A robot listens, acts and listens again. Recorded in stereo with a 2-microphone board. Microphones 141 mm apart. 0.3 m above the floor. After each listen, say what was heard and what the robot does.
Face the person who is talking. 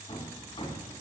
Keep listening.
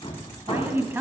The woman speaking: about 15° right or 165° right. Turn 15° right.
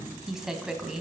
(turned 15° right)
Found it: a woman speaking, straight ahead, 1 to 2 m away.